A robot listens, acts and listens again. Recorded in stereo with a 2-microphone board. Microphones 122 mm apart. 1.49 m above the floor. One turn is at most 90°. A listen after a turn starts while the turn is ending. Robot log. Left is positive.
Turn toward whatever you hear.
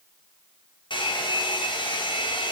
note: The hair dryer: about 40° left or 140° left.
cmd yaw +40
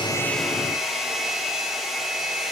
end: Facing the hair dryer.